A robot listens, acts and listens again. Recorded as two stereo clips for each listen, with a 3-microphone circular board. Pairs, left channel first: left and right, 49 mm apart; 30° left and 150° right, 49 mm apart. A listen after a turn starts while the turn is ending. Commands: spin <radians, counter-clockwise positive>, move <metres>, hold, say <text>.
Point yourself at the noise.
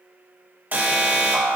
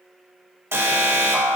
spin -2.36
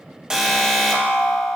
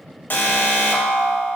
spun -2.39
say Facing the alarm.